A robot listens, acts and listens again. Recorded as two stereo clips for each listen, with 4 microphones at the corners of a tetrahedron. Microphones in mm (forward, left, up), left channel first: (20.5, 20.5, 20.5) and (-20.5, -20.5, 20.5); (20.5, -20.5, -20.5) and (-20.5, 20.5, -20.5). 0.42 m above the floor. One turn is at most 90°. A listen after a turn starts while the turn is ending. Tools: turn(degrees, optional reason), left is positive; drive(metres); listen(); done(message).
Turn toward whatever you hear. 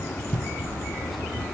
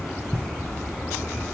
listen()
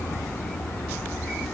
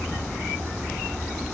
listen()
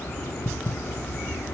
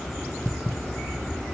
done("I can't make out anything.")